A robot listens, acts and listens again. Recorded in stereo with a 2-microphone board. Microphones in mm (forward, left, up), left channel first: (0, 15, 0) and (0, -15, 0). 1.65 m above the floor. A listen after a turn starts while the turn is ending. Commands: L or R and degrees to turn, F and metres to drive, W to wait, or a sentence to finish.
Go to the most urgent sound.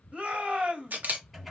R45
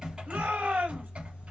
R90
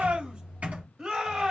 R25
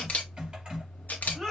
F1.0
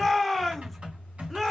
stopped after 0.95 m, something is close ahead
Arrived at the shout, straight ahead.